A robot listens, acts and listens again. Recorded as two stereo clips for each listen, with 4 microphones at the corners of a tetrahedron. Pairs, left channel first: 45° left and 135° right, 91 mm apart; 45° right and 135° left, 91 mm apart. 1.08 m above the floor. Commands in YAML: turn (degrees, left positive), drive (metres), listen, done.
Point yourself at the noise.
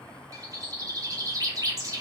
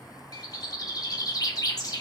turn: -90
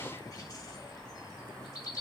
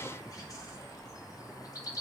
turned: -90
done: "Facing the bird."